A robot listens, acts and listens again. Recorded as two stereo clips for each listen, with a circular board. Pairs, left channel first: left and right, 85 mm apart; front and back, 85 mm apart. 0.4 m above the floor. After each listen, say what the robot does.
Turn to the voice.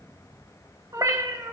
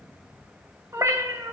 Keep listening.
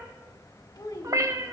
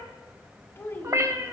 Turn 55° left.
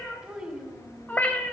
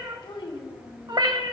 Turn 10° right.
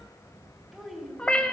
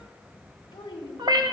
Found it: a child speaking, straight ahead.